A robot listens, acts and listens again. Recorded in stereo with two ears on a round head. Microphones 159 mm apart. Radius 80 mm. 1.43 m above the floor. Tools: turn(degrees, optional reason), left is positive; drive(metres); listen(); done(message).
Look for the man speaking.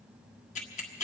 listen()
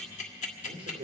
turn(degrees=-30, reason="The man speaking: about 30° right or 150° right.")
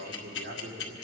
turn(degrees=-130, reason="So it is at 130° right.")
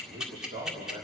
turn(degrees=-30, reason="The man speaking is now 30° right.")
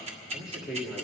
done("Found it: a man speaking, straight ahead.")